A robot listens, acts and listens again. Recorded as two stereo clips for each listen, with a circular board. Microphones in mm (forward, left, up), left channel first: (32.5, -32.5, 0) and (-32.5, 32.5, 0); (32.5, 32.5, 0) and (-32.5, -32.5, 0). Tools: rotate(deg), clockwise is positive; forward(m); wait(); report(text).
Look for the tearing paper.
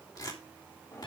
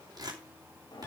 rotate(90)
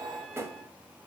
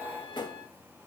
wait()
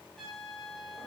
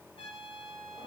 wait()
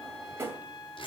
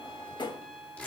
rotate(25)
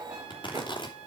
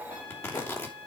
rotate(15)
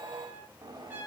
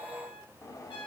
wait()
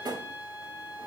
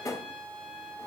wait()
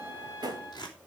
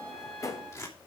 report("Found it: tearing paper, straight ahead.")